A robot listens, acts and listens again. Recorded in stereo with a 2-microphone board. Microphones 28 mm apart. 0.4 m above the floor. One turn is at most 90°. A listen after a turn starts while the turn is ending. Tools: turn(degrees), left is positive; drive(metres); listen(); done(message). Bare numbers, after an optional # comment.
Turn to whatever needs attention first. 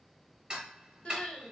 # The crying: about 50° left or 130° left.
turn(50)
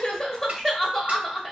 # So it is at 10° left.
turn(10)
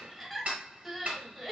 done("Facing the crying, under 1 m away.")